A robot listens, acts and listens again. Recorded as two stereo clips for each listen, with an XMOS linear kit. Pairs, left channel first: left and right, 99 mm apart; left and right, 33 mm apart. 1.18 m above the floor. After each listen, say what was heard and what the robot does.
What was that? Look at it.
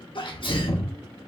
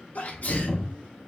The sneeze: about 55° left or 125° left. Turn 55° left.
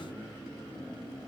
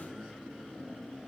Keep listening.
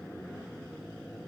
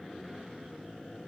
I heard a sneeze, but can't make it out now. It was about straight ahead or 70° left.